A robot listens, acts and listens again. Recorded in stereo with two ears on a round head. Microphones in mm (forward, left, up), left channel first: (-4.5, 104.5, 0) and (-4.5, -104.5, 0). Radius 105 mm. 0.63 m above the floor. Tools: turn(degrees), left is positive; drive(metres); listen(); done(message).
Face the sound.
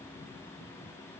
listen()
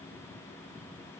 listen()
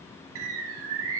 turn(degrees=-65)
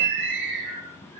turn(degrees=-50)
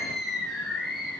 done("Facing the bird.")